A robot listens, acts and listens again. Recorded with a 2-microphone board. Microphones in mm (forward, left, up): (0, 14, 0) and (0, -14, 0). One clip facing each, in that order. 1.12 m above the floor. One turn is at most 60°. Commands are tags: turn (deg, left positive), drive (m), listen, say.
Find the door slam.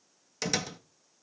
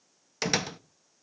<turn deg="-25"/>
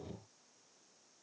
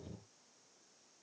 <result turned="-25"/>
<listen/>
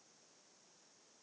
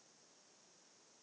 <say>I heard a door slam, but can't make it out now. It was about straight ahead or 130° right.</say>